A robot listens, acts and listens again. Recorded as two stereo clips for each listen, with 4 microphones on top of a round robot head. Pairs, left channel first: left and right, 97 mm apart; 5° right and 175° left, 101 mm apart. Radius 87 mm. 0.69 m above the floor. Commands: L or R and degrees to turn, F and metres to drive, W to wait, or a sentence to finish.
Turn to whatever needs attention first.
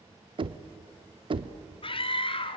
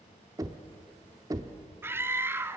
L105
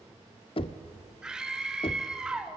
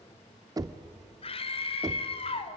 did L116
R10
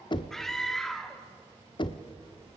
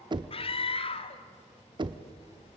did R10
Found it: a scream, straight ahead.